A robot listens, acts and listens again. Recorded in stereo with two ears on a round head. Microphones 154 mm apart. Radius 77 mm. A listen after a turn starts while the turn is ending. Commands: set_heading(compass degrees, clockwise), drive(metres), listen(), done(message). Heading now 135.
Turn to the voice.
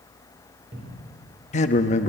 set_heading(95)
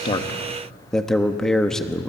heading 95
done("Facing the man speaking, 1 to 2 m away.")